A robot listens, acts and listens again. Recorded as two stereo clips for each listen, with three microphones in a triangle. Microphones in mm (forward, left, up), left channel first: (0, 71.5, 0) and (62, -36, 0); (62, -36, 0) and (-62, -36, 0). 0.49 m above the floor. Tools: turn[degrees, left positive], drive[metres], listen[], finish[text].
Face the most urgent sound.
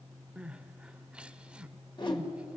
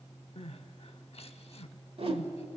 Thought: The crying: 20° left.
Action: turn[20]
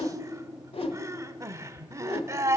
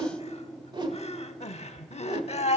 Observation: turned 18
Action: finish[Found it: crying, straight ahead.]